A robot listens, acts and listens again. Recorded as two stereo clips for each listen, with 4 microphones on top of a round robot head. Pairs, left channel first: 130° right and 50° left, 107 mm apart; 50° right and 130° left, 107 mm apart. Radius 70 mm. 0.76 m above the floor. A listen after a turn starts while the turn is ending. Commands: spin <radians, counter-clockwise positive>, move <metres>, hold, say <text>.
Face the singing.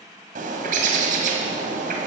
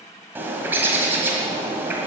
hold
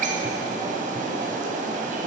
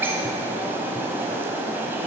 hold
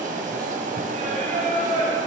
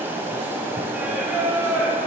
spin 1.05
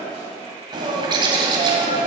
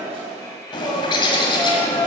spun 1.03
spin 0.26
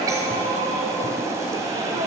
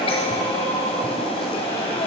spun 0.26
hold
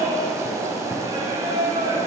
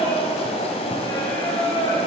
say Facing the singing.